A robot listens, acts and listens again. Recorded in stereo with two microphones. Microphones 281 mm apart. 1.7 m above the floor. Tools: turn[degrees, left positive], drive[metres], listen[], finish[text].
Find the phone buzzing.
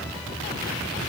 Action: listen[]
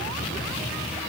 Action: listen[]
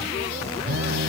Thought: The phone buzzing: about 50° right or 130° right.
Action: turn[-50]
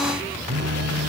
Thought: So it is at 70° right.
Action: turn[-70]
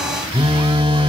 Thought: The phone buzzing is now 20° right.
Action: turn[-20]
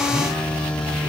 Action: finish[Facing the phone buzzing.]